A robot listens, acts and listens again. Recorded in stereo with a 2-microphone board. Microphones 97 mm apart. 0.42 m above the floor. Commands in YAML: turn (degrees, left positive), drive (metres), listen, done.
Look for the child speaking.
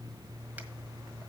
listen: true
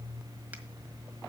listen: true
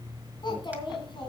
turn: 60
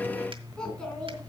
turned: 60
turn: 10
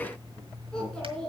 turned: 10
turn: 10
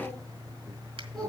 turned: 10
done: "Facing the child speaking, 2 to 4 m away."